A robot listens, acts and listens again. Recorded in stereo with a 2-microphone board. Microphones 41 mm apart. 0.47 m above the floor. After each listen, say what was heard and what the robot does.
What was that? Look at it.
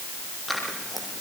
Turn 30° left.
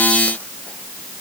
Keep listening.
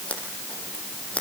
So it is at 150° left. Turn 150° left.
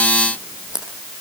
The scissors is now 15° right. Turn 15° right.
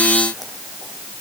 Keep listening.
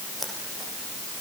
Found it: scissors, straight ahead, over 4 m away.